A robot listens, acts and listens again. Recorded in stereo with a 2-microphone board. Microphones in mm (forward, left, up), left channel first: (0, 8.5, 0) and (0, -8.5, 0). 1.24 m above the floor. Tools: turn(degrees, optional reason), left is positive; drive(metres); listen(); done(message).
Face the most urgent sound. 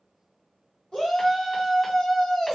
turn(degrees=75, reason="The shout: about 75° left or 105° left.")
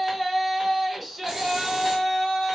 done("Found it: a shout, straight ahead, 1 to 2 m away.")